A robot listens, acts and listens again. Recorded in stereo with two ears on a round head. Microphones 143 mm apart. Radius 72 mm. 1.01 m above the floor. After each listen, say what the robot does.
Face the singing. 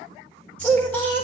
Turn 30° left.
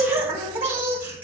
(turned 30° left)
Turn 10° right.
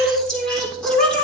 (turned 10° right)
Found it: singing, straight ahead, 2 to 4 m away.